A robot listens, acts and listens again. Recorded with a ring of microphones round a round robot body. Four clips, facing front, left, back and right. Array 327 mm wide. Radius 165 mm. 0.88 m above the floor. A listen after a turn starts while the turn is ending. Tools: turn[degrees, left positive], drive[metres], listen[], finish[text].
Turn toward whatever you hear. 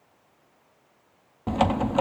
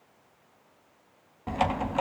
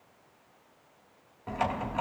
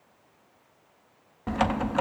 Thought: The typing on a keyboard: 20° right.
Action: turn[-20]
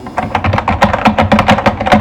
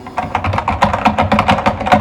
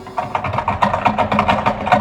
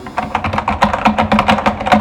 Action: finish[Facing the typing on a keyboard, under 1 m away.]